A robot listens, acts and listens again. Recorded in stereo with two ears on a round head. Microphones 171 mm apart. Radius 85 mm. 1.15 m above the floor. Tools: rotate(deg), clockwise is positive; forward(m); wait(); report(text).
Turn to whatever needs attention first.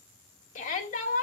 rotate(-40)
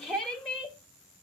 report("Facing the shout, 1 to 2 m away.")